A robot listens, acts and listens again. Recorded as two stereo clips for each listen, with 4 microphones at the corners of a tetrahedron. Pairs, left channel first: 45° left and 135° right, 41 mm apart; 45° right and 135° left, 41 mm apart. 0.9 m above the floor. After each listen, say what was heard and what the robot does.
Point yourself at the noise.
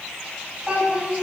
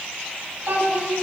The child speaking: 165° left. Turn 165° left.
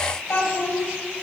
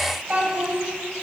The child speaking is now 75° left. Turn 75° left.
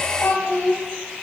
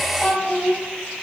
The child speaking is now 15° left. Turn 15° left.
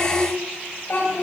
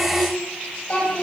The child speaking is now 10° left. Turn 10° left.
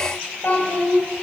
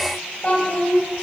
Facing the child speaking.